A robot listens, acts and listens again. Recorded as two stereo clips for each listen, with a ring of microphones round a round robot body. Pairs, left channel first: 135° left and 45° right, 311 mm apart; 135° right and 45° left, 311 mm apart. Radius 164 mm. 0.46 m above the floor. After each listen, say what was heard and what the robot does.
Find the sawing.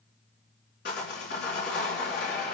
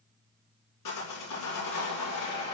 The sawing: 165° right. Turn 165° right.
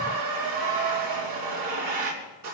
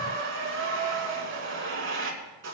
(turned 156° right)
The sawing is now 10° right. Turn 10° right.
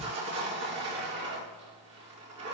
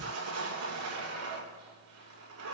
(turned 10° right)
Facing the sawing, over 4 m away.